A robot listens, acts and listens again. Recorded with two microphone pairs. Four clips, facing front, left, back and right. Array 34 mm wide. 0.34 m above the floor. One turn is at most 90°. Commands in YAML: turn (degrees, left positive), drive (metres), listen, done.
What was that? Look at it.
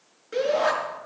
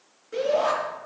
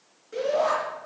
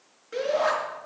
turn: -30
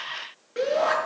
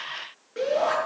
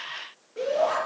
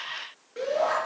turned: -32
done: "Found it: a shout, straight ahead, over 4 m away."